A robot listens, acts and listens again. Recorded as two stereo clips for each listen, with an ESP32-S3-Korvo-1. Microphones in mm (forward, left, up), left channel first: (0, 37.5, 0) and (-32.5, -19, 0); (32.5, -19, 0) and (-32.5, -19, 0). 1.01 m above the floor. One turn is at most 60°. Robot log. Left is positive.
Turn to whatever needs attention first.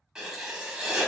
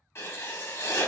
cmd idle
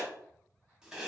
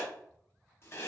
cmd idle
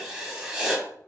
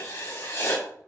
end: I can't make out anything urgent to turn to.